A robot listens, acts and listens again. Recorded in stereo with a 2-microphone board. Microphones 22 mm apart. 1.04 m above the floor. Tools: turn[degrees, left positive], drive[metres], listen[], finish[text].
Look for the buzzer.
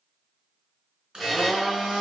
Action: turn[30]
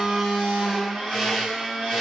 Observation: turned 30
Action: listen[]
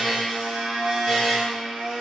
Thought: So it is at 145° left.
Action: turn[145]
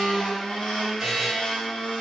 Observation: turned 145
Thought: The buzzer is now 35° right.
Action: turn[-35]
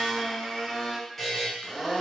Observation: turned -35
Thought: The buzzer is now 15° left.
Action: turn[15]
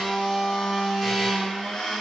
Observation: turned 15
Action: listen[]
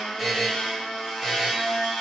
Action: finish[Found it: a buzzer, straight ahead, 1 to 2 m away.]